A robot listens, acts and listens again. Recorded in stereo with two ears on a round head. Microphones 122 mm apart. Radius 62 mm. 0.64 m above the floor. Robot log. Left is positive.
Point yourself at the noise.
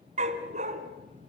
note: The dog barking: about 60° right or 120° right.
cmd yaw -60
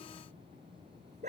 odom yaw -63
note: So it is at 55° right.
cmd yaw -55
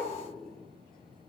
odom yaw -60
end: Facing the dog barking, 2 to 4 m away.